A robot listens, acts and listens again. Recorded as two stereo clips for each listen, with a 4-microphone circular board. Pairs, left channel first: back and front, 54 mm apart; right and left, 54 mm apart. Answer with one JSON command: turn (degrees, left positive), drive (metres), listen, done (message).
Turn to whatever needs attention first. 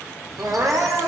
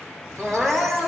{"turn": 20}
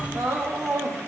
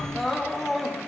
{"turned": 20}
{"done": "Found it: crying, straight ahead, 1 to 2 m away."}